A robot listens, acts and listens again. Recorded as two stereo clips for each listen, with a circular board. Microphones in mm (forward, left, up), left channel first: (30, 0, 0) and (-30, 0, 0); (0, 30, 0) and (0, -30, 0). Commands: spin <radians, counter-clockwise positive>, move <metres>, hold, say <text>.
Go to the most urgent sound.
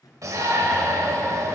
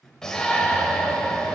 spin 2.97
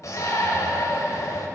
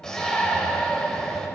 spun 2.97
spin 0.17
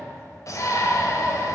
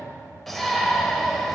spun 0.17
move 1.0
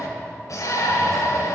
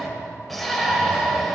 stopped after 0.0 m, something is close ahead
say Something is in my way. I am facing the shout but have not reached it.